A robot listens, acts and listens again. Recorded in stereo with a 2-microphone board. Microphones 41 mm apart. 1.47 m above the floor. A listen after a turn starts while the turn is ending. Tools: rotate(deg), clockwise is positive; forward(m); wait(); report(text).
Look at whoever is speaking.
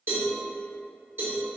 wait()
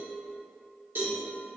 wait()
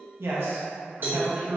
rotate(75)
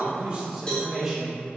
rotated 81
rotate(15)
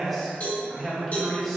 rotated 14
report("Found it: a man speaking, straight ahead.")